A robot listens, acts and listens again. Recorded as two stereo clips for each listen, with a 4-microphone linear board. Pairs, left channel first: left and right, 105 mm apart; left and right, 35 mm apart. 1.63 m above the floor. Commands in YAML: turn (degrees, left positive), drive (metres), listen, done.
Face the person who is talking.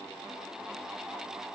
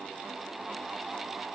listen: true
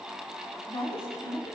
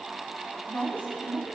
turn: 70
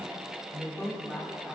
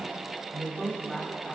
done: "Found it: a woman speaking, straight ahead, 2 to 4 m away."